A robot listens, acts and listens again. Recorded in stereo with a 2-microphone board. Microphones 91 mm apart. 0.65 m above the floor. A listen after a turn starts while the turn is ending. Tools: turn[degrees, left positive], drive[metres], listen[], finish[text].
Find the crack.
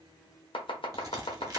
Thought: The crack: about 45° right or 135° right.
Action: turn[-45]
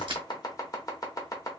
Action: listen[]
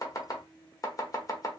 Action: finish[I heard a crack, but can't make it out now. It was about straight ahead or 90° right.]